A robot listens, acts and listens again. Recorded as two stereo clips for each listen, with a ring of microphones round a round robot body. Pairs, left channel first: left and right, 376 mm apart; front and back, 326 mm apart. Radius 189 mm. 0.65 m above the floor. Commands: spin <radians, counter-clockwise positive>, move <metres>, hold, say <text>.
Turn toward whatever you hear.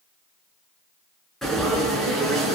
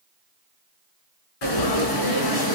say Found it: frying, straight ahead.